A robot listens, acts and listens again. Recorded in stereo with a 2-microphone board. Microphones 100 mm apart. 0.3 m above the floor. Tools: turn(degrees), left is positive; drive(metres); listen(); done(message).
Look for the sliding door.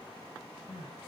listen()
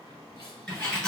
turn(degrees=30)
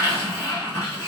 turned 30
turn(degrees=145)
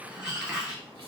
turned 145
turn(degrees=-10)
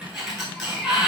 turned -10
done("Found it: a sliding door, straight ahead, 1 to 2 m away.")